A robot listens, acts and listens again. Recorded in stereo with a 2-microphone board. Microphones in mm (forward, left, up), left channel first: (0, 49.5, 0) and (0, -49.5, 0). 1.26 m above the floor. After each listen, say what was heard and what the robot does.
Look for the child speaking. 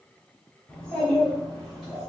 Turn 30° left.
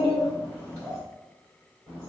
So it is at 45° right. Turn 45° right.
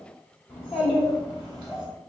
Found it: a child speaking, straight ahead.